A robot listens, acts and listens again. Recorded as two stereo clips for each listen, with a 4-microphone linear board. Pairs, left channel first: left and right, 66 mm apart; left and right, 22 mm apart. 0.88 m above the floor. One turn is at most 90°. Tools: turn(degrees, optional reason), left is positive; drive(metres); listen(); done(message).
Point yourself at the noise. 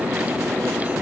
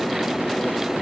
listen()
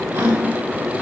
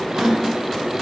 turn(degrees=-40, reason="The gasp: about 40° right or 140° right.")
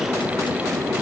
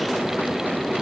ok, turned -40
listen()
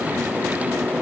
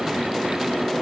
done("I heard a gasp, but can't make it out now. It was about straight ahead or 100° right.")